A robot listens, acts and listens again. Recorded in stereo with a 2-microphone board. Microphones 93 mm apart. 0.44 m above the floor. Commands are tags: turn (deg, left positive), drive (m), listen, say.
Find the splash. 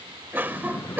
<turn deg="35"/>
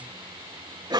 <listen/>
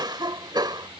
<say>I heard a splash, but can't make it out now. It was about straight ahead or 110° left.</say>